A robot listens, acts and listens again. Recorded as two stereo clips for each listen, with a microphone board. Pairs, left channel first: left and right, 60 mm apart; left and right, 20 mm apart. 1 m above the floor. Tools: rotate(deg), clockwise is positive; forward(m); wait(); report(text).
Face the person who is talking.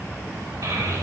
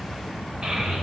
rotate(90)
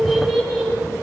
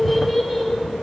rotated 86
report("Found it: a child speaking, straight ahead, 2 to 4 m away.")